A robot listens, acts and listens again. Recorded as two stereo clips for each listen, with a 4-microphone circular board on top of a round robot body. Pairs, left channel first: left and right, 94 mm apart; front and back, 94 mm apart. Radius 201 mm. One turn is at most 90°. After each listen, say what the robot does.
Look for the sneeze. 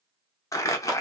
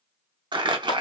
Keep listening.
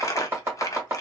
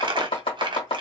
Keep listening.
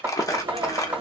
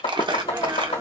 Turn 90° right.
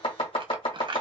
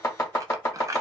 Turn 25° right.
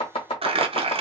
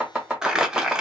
I heard a sneeze from this way, but can't make it out now.